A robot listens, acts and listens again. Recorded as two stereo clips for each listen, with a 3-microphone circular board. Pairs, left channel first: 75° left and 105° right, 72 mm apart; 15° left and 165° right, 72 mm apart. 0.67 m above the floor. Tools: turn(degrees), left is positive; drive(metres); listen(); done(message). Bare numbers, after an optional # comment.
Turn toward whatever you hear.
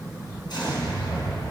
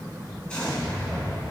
# The explosion: 95° left.
turn(95)
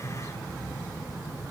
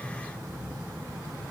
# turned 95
done("I heard an explosion from this way, but can't make it out now.")